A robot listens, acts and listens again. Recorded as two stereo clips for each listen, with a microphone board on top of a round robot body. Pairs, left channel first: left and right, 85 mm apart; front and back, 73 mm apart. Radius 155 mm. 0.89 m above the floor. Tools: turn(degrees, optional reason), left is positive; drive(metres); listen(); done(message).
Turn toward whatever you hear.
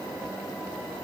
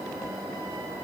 listen()
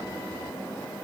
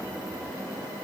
listen()
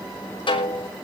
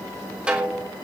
turn(degrees=105, reason="The snare drum: 105° left.")
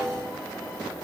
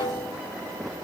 done("Facing the snare drum, 2 to 4 m away.")